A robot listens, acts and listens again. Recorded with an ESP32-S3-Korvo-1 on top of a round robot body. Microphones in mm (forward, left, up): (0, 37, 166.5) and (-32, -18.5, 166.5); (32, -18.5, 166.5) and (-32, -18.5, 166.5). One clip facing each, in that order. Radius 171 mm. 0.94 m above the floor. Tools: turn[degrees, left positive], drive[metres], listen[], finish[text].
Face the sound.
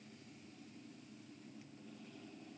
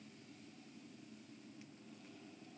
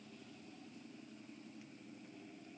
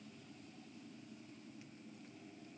Action: listen[]
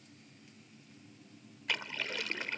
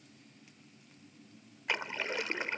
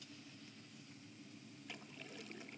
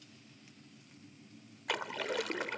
Thought: The splash: 175° left.
Action: turn[175]
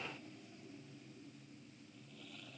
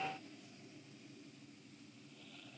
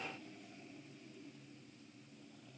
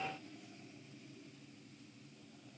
Action: finish[Facing where the splash came from. I can't hear it now.]